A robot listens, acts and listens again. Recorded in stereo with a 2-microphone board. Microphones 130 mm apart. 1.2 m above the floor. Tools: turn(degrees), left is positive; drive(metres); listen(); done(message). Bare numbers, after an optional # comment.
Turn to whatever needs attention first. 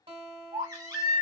# The baby crying: about 30° right or 150° right.
turn(-30)
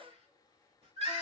# So it is at 120° right.
turn(-120)
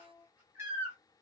# The baby crying is now 20° right.
turn(-20)
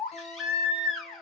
done("Found it: a baby crying, straight ahead, 1 to 2 m away.")